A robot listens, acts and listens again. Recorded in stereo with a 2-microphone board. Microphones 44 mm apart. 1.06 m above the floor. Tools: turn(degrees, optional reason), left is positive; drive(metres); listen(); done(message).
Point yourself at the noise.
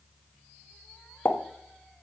turn(degrees=60, reason="The pop: about 60° left or 120° left.")
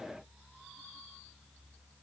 listen()
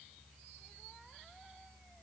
done("I heard a pop, but can't make it out now. It was about straight ahead or 60° left.")